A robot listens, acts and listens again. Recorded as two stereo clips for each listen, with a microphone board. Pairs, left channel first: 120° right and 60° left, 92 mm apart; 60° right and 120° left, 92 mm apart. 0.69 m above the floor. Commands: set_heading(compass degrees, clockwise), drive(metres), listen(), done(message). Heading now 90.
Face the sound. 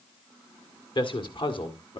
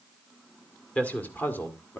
set_heading(215)
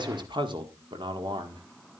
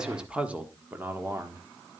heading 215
set_heading(155)
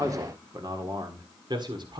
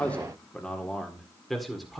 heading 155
set_heading(125)
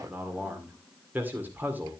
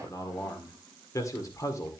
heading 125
set_heading(135)
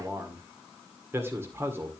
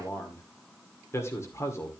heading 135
done("Found it: a man speaking, straight ahead.")